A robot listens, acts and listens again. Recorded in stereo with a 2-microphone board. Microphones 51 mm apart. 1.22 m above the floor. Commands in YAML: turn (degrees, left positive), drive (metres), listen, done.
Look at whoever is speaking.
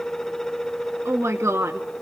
turn: -60
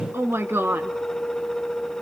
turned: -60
turn: -55
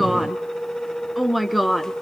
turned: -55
done: "Found it: a woman speaking, straight ahead."